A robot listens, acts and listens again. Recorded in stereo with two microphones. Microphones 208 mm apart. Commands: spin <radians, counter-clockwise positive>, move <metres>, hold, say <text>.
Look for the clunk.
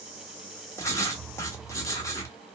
hold
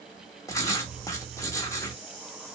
hold
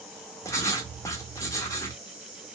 say I can't make out a clunk to turn to.